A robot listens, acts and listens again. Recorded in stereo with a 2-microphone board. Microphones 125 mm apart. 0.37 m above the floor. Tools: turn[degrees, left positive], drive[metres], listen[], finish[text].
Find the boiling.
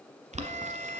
Thought: The boiling: about 65° right or 115° right.
Action: turn[-65]
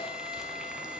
Action: listen[]
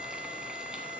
Action: listen[]
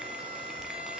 Action: finish[I heard boiling, but can't make it out now. It was about straight ahead or 50° right.]